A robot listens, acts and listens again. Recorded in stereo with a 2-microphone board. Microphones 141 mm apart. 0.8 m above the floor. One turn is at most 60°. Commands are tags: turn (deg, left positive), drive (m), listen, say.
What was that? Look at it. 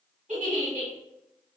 <turn deg="-60"/>
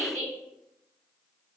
<turn deg="-55"/>
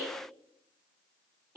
<turn deg="-20"/>
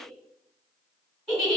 <say>Found it: a giggle, straight ahead.</say>